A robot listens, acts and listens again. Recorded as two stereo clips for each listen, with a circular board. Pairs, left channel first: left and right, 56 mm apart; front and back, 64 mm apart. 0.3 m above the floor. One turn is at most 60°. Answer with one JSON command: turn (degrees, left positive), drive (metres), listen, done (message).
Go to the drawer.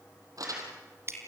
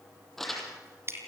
{"listen": true}
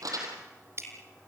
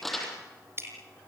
{"listen": true}
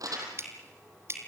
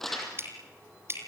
{"done": "I can't make out a drawer to turn to."}